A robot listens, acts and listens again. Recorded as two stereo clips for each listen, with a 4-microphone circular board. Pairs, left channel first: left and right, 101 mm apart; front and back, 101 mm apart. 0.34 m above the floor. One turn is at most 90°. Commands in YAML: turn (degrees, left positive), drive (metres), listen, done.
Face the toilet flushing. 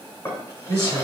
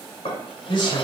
listen: true
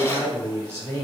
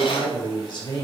listen: true
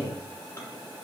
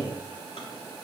done: "I can't make out a toilet flushing to turn to."